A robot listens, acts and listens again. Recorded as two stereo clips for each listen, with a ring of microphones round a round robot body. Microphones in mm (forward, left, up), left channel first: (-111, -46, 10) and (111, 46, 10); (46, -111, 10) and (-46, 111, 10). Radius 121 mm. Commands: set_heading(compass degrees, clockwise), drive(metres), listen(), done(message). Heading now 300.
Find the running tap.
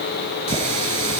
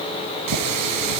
set_heading(205)
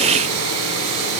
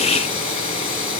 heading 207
done("Found it: a running tap, straight ahead, over 4 m away.")